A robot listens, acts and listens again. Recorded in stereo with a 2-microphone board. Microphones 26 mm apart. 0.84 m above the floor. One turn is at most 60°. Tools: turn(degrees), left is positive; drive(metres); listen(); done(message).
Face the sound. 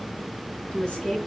turn(degrees=40)
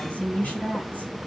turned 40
turn(degrees=60)
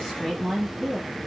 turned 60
turn(degrees=25)
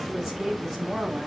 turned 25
turn(degrees=-10)
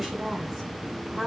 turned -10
done("Facing the woman speaking.")